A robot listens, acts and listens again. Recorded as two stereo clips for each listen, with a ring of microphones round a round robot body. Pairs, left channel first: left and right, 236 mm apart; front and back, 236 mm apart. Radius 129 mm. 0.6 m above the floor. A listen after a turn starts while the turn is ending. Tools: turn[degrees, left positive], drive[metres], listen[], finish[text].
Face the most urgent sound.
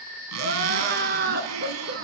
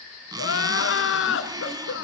Thought: The crying: 35° right.
Action: turn[-35]
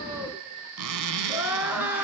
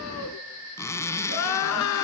Action: finish[Facing the crying, 1 to 2 m away.]